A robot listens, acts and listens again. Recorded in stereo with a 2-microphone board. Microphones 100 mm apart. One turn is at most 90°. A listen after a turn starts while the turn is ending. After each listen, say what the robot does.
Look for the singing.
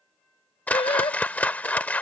Turn 75° left.
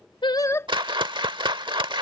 Turn 30° left.
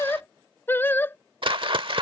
Turn 25° left.
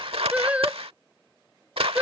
Turn 15° right.
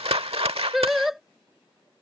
Found it: singing, straight ahead.